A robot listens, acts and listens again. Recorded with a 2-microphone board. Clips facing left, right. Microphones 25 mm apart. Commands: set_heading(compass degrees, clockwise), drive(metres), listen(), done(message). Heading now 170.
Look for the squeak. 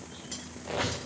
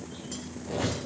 set_heading(100)
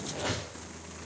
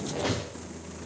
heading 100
done("Found it: a squeak, straight ahead.")